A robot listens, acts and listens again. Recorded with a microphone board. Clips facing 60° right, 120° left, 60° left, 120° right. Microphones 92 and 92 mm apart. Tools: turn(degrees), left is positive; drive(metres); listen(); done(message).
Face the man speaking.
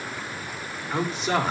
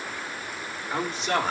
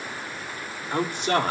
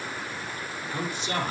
turn(degrees=30)
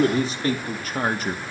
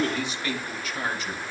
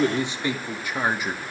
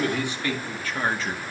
turn(degrees=-20)
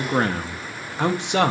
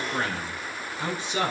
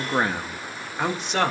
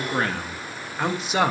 turn(degrees=-40)
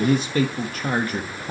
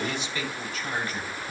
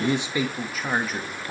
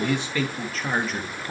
turn(degrees=-35)
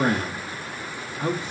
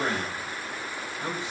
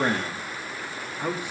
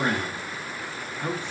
turn(degrees=-15)
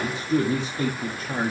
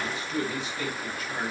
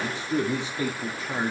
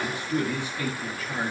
done("Found it: a man speaking, straight ahead, 1 to 2 m away.")